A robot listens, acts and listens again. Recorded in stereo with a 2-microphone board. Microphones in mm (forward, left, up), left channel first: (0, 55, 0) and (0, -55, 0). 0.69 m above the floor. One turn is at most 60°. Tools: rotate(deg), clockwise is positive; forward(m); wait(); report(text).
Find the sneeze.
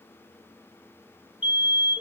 wait()
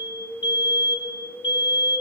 wait()
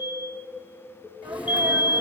rotate(30)
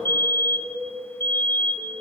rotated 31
wait()
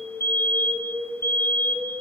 report("I heard a sneeze, but can't make it out now. It was about 20° left or 135° right.")